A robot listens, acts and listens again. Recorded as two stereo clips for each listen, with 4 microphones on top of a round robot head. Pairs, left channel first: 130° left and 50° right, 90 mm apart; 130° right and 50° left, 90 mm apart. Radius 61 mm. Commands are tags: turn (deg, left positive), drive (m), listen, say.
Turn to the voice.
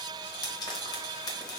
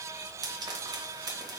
<listen/>
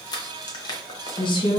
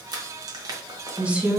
<turn deg="125"/>
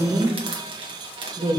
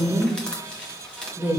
<turn deg="-15"/>
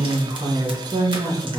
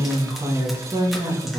<say>Found it: a woman speaking, straight ahead, 1 to 2 m away.</say>